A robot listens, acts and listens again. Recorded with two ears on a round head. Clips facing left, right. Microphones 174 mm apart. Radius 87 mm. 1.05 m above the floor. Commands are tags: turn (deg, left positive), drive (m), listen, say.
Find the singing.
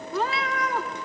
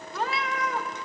<listen/>
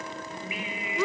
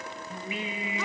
<turn deg="-25"/>
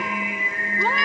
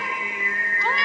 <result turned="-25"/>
<turn deg="15"/>
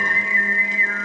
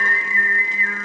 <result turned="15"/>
<turn deg="25"/>
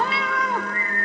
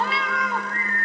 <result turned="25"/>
<turn deg="10"/>
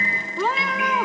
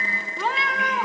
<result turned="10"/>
<say>Facing the singing, 2 to 4 m away.</say>